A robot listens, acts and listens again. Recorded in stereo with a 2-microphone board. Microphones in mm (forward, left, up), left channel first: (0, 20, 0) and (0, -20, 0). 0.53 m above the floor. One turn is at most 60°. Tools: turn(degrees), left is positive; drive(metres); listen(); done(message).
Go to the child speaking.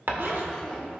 turn(degrees=30)
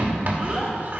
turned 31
turn(degrees=-15)
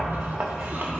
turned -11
listen()
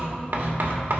listen()
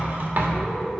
drive(metres=1.0)
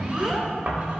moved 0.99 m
drive(metres=1.0)
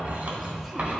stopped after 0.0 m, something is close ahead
listen()
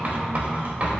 listen()
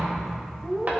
done("Arrived at the child speaking, straight ahead.")